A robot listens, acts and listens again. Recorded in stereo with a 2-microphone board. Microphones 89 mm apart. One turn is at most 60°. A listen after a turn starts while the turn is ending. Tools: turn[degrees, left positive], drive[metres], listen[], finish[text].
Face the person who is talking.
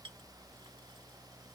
Action: listen[]
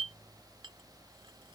Action: listen[]
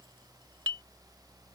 Action: finish[I can't make out anyone speaking, only a clink.]